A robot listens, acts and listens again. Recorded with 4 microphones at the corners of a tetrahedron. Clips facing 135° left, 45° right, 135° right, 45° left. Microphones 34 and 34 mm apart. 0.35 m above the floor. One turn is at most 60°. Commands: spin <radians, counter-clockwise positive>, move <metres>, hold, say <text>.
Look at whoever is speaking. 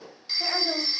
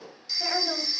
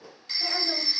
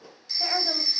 spin 0.87
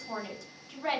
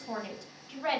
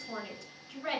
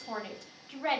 spin 0.26
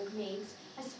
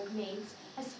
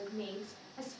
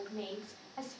say Facing the woman speaking, 1 to 2 m away.